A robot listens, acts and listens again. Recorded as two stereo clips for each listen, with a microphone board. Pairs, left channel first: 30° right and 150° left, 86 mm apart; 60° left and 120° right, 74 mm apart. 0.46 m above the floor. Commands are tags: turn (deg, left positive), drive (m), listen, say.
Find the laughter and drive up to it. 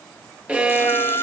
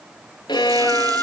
<drive m="1.0"/>
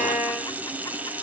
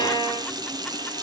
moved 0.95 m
<listen/>
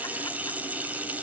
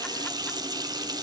<listen/>
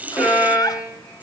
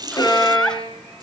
<turn deg="-15"/>
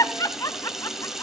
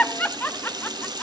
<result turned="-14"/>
<drive m="1.0"/>
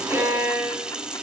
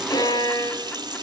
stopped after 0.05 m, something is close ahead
<listen/>
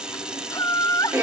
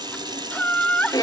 <say>Arrived at the laughter, straight ahead.</say>